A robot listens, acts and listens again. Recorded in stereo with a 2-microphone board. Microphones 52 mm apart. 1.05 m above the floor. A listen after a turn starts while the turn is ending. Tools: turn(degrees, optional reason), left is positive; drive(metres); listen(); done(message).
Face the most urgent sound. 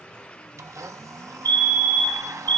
turn(degrees=50, reason="The fire alarm: about 50° left or 130° left.")
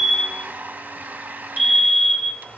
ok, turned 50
done("Facing the fire alarm, 2 to 4 m away.")